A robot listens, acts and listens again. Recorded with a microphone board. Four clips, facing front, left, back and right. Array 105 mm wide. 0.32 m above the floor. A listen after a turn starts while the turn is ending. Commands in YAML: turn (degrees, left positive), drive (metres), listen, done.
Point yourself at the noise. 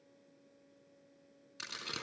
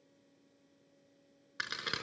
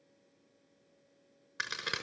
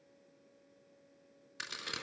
turn: 135
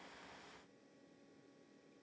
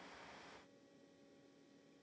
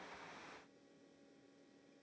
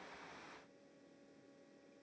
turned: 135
done: "I heard a crack from this way, but can't make it out now."